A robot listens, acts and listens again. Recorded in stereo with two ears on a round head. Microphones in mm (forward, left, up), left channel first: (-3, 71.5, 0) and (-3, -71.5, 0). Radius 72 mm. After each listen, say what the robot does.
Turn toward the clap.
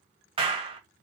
Turn 35° right.
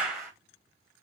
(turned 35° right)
Found it: a clap, straight ahead, 1 to 2 m away.